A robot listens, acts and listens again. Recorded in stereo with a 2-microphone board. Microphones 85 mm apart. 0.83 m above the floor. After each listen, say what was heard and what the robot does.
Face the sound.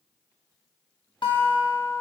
The guitar: about 70° left or 110° left. Turn 70° left.
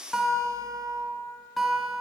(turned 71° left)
Found it: a guitar, straight ahead, under 1 m away.